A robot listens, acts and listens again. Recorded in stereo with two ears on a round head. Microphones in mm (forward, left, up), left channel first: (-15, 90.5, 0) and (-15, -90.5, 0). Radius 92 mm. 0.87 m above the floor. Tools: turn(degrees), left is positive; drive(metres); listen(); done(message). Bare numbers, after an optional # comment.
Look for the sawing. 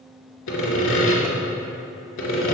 # The sawing: about 60° left or 120° left.
turn(60)
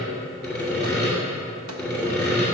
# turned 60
done("Facing the sawing, 2 to 4 m away.")